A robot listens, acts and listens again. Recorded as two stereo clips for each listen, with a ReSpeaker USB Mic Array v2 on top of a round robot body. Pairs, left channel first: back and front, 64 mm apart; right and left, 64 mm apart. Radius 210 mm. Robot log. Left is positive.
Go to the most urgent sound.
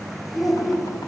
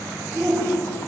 note: The shout: 175° left.
cmd yaw +175
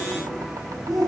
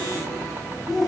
cmd fwd 1.0
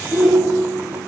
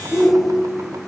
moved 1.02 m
cmd fwd 1.0
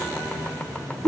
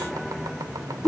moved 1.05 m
cmd fwd 1.0
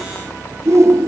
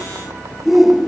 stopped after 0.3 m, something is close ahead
end: Arrived at the shout, straight ahead.